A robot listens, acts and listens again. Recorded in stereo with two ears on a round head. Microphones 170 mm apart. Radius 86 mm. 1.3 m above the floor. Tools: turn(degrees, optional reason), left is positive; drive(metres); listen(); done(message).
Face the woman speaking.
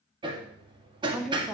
turn(degrees=-30)
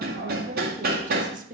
turn(degrees=-135, reason="So it is at 135° right.")
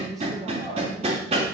listen()
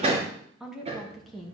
done("Facing the woman speaking, 1 to 2 m away.")